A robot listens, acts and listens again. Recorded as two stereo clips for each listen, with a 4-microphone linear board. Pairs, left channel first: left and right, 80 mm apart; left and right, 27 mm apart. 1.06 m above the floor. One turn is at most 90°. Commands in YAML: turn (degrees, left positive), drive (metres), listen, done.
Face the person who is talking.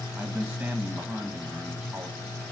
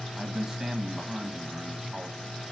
turn: -20
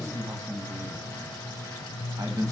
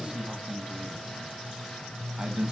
turn: -90
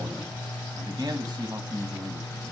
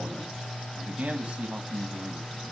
turn: -60
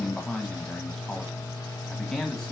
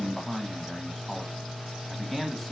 done: "Found it: a man speaking, straight ahead."